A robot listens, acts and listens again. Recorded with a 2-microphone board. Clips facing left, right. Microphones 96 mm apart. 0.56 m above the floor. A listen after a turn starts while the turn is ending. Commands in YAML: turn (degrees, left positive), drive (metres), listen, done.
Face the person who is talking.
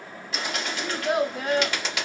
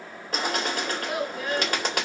turn: 65
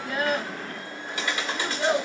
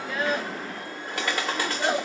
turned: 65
done: "Facing the child speaking."